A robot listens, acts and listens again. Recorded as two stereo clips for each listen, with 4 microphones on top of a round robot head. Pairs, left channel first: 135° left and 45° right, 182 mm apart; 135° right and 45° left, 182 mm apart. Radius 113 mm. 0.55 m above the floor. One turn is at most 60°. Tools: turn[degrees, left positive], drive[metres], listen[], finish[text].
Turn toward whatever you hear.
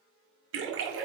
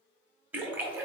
Thought: The splash: 35° right.
Action: turn[-35]
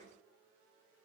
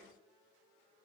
Action: finish[Facing where the splash came from. I can't hear it now.]